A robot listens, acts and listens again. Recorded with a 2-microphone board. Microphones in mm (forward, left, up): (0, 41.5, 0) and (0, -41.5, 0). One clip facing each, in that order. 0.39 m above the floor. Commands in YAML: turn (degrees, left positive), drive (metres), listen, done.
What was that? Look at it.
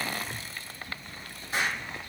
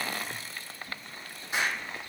turn: -20
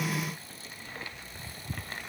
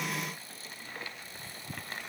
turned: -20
listen: true
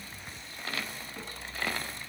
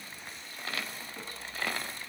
done: "I heard an explosion, but can't make it out now. It was about straight ahead or 140° right."